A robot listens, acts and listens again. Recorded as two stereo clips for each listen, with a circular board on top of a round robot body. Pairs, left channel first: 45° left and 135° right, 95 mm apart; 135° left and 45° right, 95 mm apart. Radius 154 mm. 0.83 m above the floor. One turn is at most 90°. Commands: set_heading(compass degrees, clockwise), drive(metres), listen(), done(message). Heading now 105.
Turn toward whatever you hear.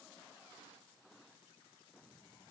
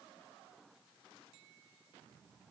listen()
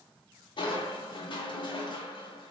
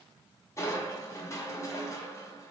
set_heading(30)
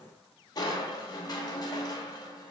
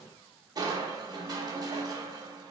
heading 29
done("Facing the crushing.")